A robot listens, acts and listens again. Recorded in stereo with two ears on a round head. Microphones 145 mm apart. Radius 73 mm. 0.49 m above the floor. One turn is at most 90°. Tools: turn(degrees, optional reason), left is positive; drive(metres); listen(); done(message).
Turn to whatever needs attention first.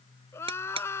turn(degrees=15, reason="The crying: about 15° left or 165° left.")
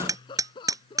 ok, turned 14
turn(degrees=90, reason="So it is at 150° left.")
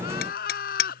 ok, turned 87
turn(degrees=60, reason="The crying is now 60° left.")
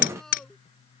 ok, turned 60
listen()
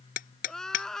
done("Found it: crying, straight ahead.")